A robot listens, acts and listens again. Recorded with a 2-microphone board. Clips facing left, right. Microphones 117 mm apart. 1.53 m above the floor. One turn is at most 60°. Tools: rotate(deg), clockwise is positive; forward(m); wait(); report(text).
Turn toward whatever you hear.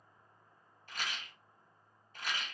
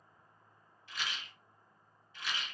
rotate(-45)
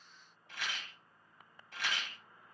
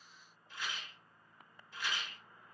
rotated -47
rotate(-60)
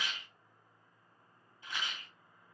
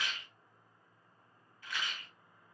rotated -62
rotate(-25)
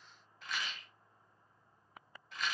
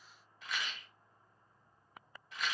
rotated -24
report("Found it: a rattle, straight ahead, under 1 m away.")